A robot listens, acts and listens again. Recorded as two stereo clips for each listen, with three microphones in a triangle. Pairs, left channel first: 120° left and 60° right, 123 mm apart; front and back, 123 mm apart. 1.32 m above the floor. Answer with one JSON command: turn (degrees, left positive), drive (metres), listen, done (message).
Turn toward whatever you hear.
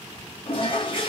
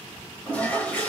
{"turn": 80}
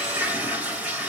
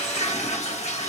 {"turn": 20}
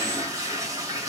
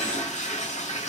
{"done": "Facing the toilet flushing, 1 to 2 m away."}